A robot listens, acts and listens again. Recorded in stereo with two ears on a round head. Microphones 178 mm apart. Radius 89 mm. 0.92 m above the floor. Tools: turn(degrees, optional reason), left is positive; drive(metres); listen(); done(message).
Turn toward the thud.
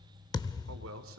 turn(degrees=20, reason="The thud: about 20° left or 160° left.")
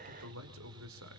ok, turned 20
listen()
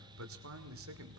done("I heard a thud, but can't make it out now. It was about straight ahead or 140° left.")